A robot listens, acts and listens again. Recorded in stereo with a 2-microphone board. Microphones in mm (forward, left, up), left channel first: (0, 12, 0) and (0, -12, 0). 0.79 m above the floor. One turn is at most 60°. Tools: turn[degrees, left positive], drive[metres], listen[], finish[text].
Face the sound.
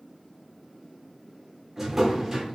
Thought: The drawer: about 15° right or 165° right.
Action: turn[-15]
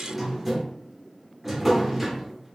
Action: finish[Facing the drawer, under 1 m away.]